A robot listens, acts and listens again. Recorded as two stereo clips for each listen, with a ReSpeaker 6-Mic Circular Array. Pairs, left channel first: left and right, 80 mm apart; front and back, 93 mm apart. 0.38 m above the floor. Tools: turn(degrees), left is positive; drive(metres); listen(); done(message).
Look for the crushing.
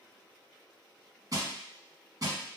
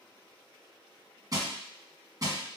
turn(degrees=-130)
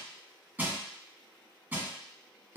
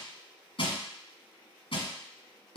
turn(degrees=-20)
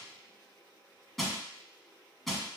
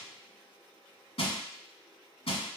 done("Found it: crushing, straight ahead.")